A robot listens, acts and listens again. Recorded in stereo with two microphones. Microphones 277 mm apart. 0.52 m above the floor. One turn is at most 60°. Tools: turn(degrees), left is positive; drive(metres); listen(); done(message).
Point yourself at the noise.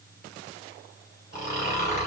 turn(degrees=25)
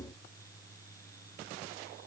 listen()
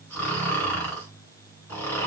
done("Facing the snoring, 2 to 4 m away.")